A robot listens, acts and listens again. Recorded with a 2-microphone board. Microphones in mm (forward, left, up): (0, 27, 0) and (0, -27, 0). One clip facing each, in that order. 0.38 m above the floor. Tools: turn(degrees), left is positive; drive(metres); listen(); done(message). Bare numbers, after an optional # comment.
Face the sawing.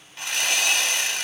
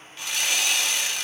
# The sawing: about 50° left or 130° left.
turn(50)
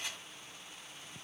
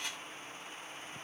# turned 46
done("Found it: sawing, straight ahead.")